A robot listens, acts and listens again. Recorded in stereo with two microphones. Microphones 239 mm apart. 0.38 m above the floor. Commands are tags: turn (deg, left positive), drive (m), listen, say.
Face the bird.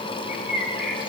<turn deg="-30"/>
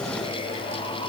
<listen/>
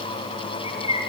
<turn deg="25"/>
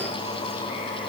<listen/>
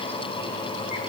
<listen/>
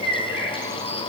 <turn deg="-10"/>
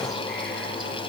<listen/>
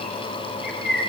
<say>Facing the bird, over 4 m away.</say>